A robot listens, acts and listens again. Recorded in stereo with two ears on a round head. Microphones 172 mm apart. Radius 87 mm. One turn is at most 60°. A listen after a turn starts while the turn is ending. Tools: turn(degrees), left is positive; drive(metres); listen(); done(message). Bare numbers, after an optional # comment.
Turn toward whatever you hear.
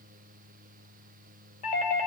# The doorbell: about 40° left or 140° left.
turn(40)
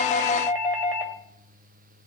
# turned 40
# So it is at 10° left.
turn(10)
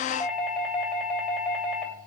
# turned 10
done("Found it: a doorbell, straight ahead, 2 to 4 m away.")